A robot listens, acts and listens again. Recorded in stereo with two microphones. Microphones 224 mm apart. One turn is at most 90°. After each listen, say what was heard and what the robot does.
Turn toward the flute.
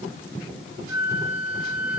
The flute: about 60° left or 120° left. Turn 60° left.
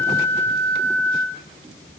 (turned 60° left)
So it is at 10° left. Turn 10° left.
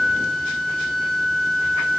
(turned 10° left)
Found it: a flute, straight ahead, 2 to 4 m away.